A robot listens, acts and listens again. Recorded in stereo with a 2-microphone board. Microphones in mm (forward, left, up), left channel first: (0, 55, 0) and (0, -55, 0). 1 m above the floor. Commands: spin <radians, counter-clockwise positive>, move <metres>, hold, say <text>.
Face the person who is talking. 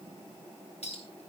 hold
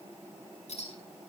hold
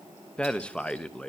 spin 0.52
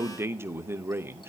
spin -0.44
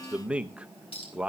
spin -0.17
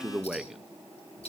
say Found it: a man speaking, straight ahead, under 1 m away.